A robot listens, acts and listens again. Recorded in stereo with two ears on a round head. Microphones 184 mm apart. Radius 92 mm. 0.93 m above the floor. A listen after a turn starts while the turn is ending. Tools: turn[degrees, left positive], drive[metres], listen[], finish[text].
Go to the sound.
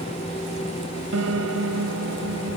Action: turn[-90]
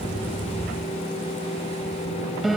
Action: drive[1.0]
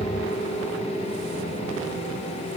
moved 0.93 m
Action: listen[]
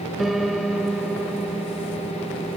Action: drive[1.0]
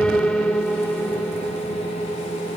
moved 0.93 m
Action: drive[1.0]
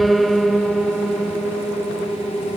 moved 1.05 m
Action: drive[1.0]
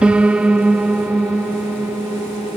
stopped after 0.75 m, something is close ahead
Action: finish[I am next to the piano.]